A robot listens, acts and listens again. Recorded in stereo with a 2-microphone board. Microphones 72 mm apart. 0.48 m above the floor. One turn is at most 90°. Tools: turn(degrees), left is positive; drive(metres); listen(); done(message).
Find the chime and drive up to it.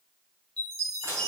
turn(degrees=30)
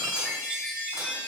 turn(degrees=-15)
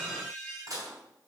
drive(metres=1.0)
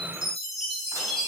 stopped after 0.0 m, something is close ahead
done("Blocked. The chime is further on, straight ahead.")